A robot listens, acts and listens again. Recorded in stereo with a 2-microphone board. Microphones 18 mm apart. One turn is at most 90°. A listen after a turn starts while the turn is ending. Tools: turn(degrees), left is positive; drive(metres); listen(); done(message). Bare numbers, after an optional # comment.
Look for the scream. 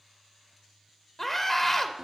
turn(30)
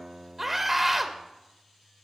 # So it is at 20° right.
turn(-20)
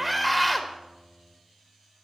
done("Facing the scream, under 1 m away.")